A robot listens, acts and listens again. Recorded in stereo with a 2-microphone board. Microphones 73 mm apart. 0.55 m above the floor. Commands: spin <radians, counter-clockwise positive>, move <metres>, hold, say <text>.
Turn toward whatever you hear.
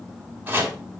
spin -0.44
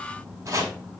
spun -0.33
spin -2.44
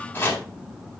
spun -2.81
spin 0.44
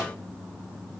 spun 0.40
hold
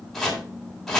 say Found it: chopping, straight ahead.